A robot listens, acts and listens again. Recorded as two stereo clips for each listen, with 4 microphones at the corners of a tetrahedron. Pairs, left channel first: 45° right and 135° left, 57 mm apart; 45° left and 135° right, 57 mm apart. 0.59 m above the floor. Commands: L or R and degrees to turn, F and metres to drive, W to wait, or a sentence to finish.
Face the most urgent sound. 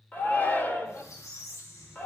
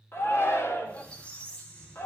L10
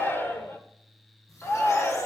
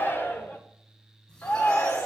Found it: a shout, straight ahead.